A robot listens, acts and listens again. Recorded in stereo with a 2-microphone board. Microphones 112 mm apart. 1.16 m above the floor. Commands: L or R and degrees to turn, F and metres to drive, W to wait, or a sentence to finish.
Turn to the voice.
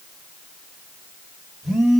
W
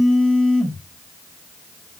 W
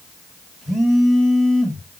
I can't make out anyone speaking, only a phone buzzing.